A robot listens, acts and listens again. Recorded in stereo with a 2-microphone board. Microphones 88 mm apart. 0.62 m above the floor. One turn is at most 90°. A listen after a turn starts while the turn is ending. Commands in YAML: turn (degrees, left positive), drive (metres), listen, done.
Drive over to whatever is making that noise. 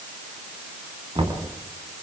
turn: -90
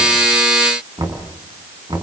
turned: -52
turn: -50
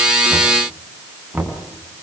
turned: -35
turn: -15
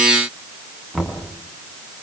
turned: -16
drive: 1.0
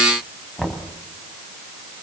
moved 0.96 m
drive: 1.0
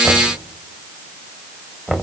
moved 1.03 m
drive: 1.0
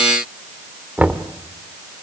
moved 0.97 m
turn: -15
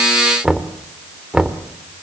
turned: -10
drive: 1.0
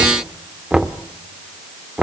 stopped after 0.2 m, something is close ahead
turn: -10
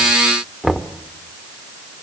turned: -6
done: "I am next to the knocking."